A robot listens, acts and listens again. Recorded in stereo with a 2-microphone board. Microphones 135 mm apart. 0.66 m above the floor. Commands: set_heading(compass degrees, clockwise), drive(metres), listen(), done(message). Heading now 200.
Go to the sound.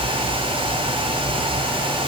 listen()
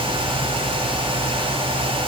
listen()
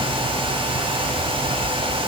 done("I can't make out anything.")